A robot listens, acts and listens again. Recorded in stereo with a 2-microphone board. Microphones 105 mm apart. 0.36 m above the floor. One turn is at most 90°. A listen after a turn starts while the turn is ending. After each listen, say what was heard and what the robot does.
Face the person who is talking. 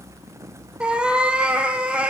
Keep listening.
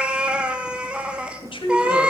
The woman speaking: about 60° left or 120° left. Turn 60° left.
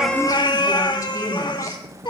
Keep listening.
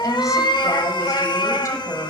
Keep listening.
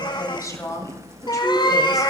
So it is at 40° left. Turn 40° left.
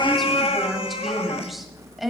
Facing the woman speaking, 1 to 2 m away.